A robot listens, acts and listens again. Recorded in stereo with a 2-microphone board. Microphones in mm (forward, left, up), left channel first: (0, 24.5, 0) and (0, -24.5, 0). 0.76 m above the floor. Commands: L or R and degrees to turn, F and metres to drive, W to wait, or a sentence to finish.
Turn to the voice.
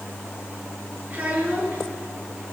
R40
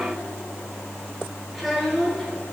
Facing the child speaking, over 4 m away.